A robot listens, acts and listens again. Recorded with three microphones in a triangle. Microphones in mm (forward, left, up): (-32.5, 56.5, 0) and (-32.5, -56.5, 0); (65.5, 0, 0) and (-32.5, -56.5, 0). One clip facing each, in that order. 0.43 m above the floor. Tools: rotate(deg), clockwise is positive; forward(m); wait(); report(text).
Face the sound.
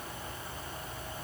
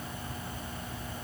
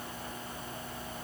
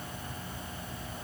wait()
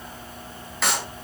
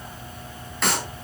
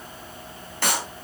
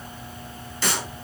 report("Facing the clap, 2 to 4 m away.")